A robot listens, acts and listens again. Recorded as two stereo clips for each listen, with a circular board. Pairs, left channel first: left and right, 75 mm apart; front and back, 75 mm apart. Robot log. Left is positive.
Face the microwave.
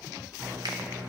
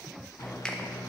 note: The microwave: 35° right.
cmd yaw -35
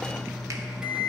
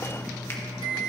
note: The microwave is now 10° right.
cmd yaw -10
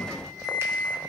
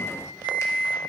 end: Facing the microwave.